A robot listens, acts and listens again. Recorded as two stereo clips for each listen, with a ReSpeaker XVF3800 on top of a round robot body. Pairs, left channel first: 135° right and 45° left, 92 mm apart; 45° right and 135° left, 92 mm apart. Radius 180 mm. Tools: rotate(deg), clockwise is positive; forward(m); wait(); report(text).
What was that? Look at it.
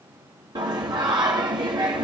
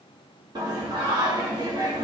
rotate(-90)
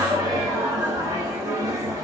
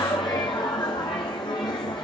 rotate(10)
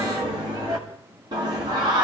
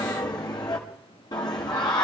report("Facing the singing, 1 to 2 m away.")